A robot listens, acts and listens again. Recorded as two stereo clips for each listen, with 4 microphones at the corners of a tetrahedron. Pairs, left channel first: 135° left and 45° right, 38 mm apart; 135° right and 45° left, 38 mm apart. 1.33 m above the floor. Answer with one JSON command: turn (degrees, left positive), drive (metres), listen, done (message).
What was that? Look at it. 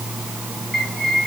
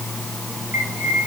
{"turn": 50}
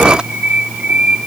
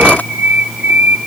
{"turn": 10}
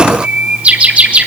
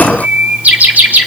{"done": "Facing the bird, over 4 m away."}